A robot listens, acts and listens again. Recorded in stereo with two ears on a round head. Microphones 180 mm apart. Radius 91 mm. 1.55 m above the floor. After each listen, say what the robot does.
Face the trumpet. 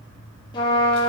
Turn 20° left.
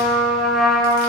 Facing the trumpet.